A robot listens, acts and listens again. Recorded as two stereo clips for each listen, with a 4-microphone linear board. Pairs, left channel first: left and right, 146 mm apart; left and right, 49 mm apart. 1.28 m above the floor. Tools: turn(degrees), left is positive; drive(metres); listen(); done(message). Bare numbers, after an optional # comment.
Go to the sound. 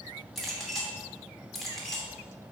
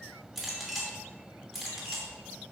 turn(30)
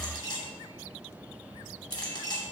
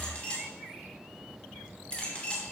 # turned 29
# So it is at 150° left.
turn(150)
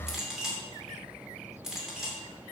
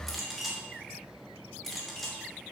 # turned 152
drive(1.0)
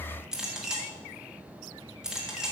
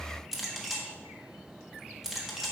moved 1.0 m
drive(1.0)
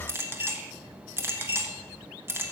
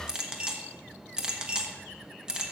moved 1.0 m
# The clink is now 15° right.
turn(-15)
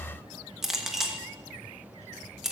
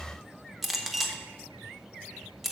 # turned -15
drive(1.0)
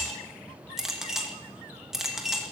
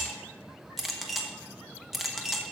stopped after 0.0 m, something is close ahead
done("Arrived at the clink, straight ahead.")